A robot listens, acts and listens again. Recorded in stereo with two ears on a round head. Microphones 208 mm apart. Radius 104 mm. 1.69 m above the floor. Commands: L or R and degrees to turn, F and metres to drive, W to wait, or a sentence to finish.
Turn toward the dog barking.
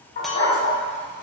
L45
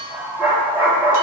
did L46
R10
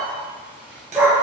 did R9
R10
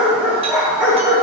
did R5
R10
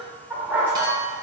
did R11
R10
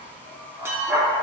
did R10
Found it: a dog barking, straight ahead, 2 to 4 m away.